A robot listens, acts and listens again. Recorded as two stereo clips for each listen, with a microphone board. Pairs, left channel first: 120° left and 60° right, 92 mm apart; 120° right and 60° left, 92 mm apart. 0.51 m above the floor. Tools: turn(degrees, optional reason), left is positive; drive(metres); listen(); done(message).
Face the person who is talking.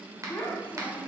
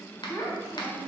turn(degrees=-170, reason="The child speaking: 170° right.")
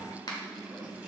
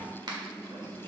listen()
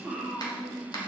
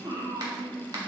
turn(degrees=30, reason="The child speaking is now 30° left.")
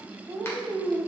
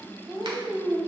done("Found it: a child speaking, straight ahead, 2 to 4 m away.")